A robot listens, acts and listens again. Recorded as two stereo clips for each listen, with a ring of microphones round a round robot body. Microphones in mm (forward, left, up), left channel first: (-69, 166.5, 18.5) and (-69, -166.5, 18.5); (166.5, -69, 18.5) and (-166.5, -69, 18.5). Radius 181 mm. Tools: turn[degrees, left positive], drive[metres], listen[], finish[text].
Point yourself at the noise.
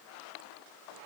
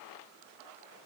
Action: listen[]
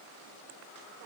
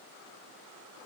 Action: listen[]
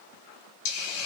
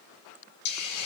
Thought: The hiss: 40° left.
Action: turn[40]
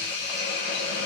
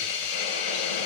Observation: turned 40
Thought: The hiss is now 25° left.
Action: turn[25]
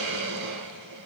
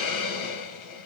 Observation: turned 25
Thought: The hiss is now 25° right.
Action: turn[-25]
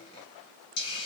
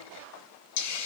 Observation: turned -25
Thought: The hiss is now 15° left.
Action: turn[15]
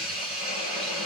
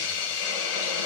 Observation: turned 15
Action: finish[Facing the hiss.]